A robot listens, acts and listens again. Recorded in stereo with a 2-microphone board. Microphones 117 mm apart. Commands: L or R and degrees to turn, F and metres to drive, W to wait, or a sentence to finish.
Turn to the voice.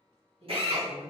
R60
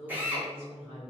R55
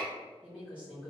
R10
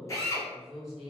Found it: a woman speaking, straight ahead, 1 to 2 m away.